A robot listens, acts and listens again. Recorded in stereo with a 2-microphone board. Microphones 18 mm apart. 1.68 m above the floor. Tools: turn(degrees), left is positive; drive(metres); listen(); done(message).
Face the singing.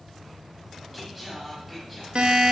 turn(degrees=-30)
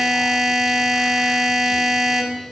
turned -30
listen()
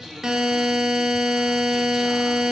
turn(degrees=-145)
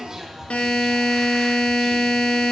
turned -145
turn(degrees=-25)
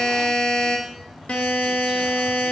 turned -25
listen()
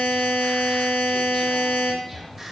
turn(degrees=-10)
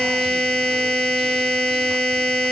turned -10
listen()
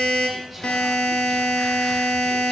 listen()
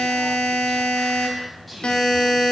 done("Facing the singing.")